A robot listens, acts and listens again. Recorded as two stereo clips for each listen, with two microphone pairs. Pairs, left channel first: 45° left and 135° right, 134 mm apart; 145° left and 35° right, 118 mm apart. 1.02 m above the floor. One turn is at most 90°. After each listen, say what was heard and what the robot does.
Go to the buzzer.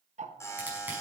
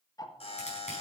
The buzzer: 110° left. Turn 90° left.
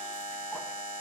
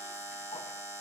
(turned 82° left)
The buzzer is now 30° left. Turn 30° left.
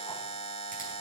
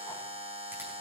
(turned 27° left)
Drive 1.0 m forward.
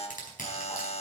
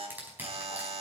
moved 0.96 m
Drive 1.0 m forward.
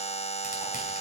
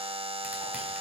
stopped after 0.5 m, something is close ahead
Arrived at the buzzer, straight ahead.